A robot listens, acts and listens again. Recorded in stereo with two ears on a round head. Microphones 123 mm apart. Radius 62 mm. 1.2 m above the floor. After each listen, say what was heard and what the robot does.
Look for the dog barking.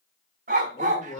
The dog barking: about 60° right or 120° right. Turn 60° right.
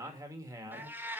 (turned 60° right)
Keep listening.
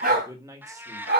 So it is at 75° right. Turn 75° right.
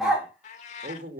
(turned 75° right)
Facing the dog barking, 2 to 4 m away.